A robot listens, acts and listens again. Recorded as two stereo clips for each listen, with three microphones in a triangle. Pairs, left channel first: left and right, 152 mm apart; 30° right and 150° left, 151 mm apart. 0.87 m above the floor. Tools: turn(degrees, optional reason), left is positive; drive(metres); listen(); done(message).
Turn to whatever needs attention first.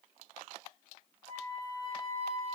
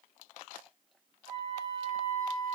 listen()
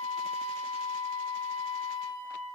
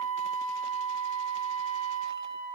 listen()
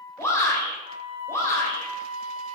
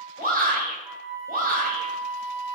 turn(degrees=160, reason="The shout: 160° left.")
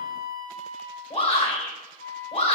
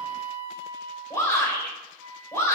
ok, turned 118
turn(degrees=40, reason="The shout is now 40° left.")
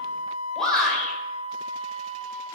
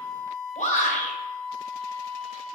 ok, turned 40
done("Facing the shout, 2 to 4 m away.")